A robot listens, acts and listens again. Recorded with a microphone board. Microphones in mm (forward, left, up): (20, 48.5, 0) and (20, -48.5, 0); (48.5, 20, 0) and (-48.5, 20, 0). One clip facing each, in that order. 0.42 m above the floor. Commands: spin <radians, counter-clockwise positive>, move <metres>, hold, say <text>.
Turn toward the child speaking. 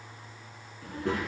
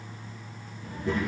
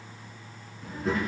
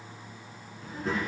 spin 1.57
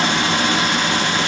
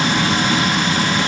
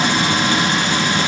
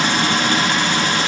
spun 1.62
hold
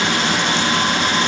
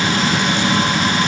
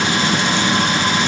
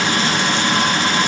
hold
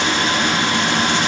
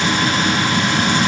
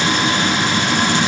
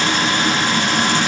say I heard a child speaking from this way, but can't make it out now.